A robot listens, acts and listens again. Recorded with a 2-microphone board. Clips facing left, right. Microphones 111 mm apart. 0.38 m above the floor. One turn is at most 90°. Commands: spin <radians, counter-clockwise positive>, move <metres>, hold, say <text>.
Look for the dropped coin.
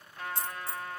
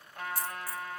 spin 0.35
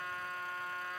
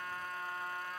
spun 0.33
hold
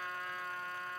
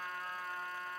say I heard a dropped coin, but can't make it out now. It was about 5° left or 140° left.